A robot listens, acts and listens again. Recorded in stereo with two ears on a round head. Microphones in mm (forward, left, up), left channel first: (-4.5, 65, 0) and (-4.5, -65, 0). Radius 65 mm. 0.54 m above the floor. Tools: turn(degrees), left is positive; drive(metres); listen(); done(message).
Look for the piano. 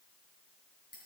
listen()
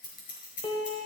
turn(degrees=45)
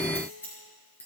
listen()
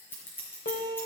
turn(degrees=90)
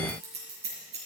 listen()
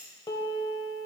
turn(degrees=30)
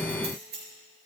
listen()
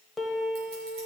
done("Found it: a piano, straight ahead.")